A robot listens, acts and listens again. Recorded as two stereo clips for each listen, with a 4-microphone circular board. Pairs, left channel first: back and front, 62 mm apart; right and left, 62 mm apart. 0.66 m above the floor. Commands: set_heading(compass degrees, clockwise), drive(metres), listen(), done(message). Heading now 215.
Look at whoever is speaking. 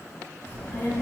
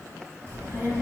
set_heading(90)
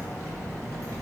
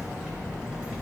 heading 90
set_heading(80)
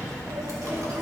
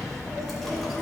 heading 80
done("Facing the child speaking.")